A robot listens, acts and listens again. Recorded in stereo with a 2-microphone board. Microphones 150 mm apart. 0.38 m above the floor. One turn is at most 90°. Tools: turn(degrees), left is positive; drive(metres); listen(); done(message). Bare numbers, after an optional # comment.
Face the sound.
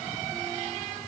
listen()
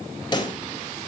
# The pop: about 30° left or 150° left.
turn(30)
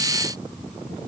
listen()
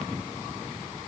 done("I heard a pop, but can't make it out now. It was about straight ahead or 120° left.")